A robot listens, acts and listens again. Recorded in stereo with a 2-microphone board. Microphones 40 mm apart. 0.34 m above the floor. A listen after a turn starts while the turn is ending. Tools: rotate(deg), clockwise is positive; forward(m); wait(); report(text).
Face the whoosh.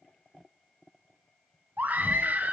wait()
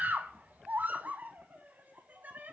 wait()
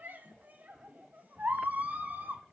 report("I can't make out a whoosh to turn to.")